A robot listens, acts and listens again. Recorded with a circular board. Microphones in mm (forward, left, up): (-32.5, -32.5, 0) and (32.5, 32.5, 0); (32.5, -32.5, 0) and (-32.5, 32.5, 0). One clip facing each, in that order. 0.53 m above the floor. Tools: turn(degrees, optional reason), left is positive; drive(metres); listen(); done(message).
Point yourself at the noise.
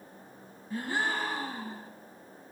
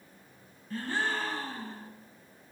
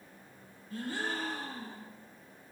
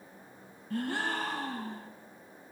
turn(degrees=150, reason="The gasp: 150° left.")
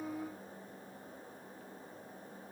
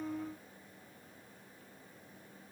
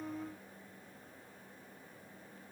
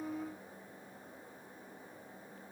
done("I heard a gasp from this way, but can't make it out now.")